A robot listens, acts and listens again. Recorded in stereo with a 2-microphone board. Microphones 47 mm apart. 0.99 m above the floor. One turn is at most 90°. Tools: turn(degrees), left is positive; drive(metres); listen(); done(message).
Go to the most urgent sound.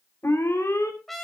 turn(degrees=90)
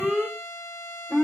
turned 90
turn(degrees=-10)
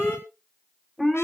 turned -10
drive(metres=1.0)
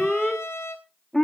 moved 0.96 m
drive(metres=1.0)
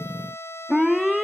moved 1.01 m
turn(degrees=-10)
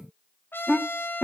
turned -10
drive(metres=1.0)
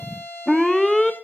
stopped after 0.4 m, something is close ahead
done("I am next to the alarm.")